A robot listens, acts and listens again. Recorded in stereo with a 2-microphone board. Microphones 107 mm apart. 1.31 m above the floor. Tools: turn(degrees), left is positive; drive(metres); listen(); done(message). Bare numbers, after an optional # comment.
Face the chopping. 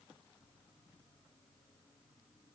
listen()
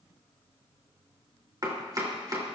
# The chopping: about 40° right or 140° right.
turn(-40)
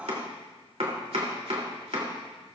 # So it is at 105° right.
turn(-105)
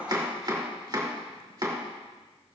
# The chopping is now 45° right.
turn(-45)
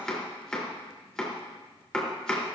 done("Found it: chopping, straight ahead, 2 to 4 m away.")